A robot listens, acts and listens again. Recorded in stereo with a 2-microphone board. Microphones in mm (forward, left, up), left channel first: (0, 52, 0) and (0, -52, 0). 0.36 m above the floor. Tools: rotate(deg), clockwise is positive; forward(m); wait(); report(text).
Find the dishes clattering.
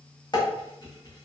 rotate(-45)
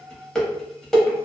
report("Facing the dishes clattering, 1 to 2 m away.")